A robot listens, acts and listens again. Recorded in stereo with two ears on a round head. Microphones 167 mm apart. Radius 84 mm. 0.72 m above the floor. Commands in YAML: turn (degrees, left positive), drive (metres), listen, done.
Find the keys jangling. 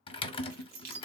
turn: -50
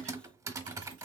listen: true
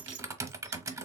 listen: true
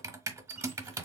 done: "I heard keys jangling, but can't make it out now. It was about straight ahead or 80° right."